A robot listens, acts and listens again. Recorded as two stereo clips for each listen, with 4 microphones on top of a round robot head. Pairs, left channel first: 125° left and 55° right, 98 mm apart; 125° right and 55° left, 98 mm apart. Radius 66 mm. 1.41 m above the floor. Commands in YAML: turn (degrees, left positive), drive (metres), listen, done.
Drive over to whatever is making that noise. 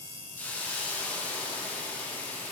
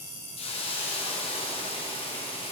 turn: -160
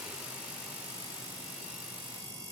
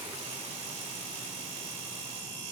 listen: true
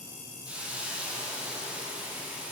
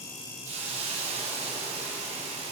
turn: 25
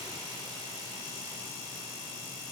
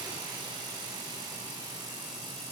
listen: true
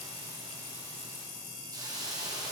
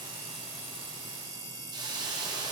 drive: 1.0
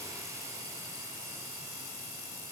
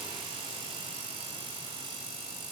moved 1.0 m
listen: true
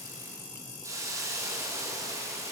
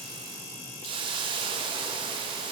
turn: 10
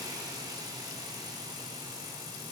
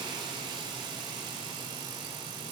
drive: 1.0
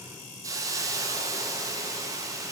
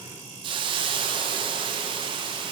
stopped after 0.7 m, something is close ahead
turn: 10
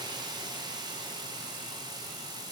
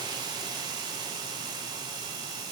done: "Arrived at the hiss, straight ahead."